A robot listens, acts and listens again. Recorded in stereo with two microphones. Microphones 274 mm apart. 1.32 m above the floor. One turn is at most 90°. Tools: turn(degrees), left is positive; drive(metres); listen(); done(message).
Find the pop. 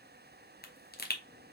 turn(degrees=35)
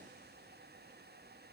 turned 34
listen()
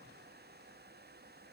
done("I heard a pop, but can't make it out now. It was about straight ahead or 110° left.")